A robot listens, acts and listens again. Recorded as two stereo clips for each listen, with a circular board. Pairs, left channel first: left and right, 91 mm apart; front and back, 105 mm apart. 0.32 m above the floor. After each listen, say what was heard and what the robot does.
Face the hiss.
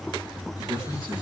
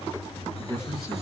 Keep listening.
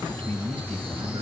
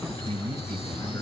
Keep listening.
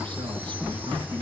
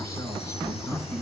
I can't make out a hiss to turn to.